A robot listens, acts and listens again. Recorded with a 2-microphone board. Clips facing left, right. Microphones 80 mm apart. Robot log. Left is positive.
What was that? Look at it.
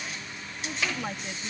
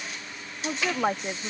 note: The woman speaking: about 50° right or 130° right.
cmd yaw -50
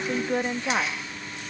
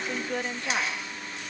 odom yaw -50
note: So it is at 25° left.
cmd yaw +25
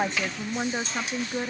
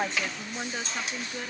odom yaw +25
note: The woman speaking is now 30° left.
cmd yaw +30
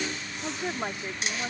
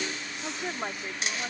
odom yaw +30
note: The woman speaking is now 10° left.
cmd yaw +10
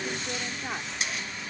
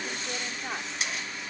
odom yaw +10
end: Facing the woman speaking.